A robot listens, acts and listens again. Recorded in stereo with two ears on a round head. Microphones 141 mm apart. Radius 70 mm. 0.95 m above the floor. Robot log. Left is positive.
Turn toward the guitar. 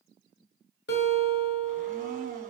note: The guitar: about 75° left or 105° left.
cmd yaw +75
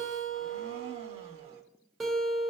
end: Found it: a guitar, straight ahead.